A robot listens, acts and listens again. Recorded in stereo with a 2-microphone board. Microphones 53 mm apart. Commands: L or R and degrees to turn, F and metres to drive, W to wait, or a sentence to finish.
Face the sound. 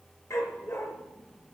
L70
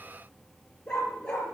L15
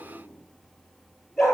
Facing the dog barking.